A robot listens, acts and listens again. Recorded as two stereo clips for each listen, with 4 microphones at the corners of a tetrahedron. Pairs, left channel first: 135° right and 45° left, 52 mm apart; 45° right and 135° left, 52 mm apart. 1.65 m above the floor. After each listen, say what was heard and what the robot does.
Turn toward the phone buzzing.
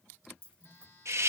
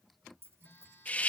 The phone buzzing: 95° right. Turn 95° right.
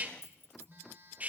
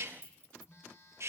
Found it: a phone buzzing, straight ahead.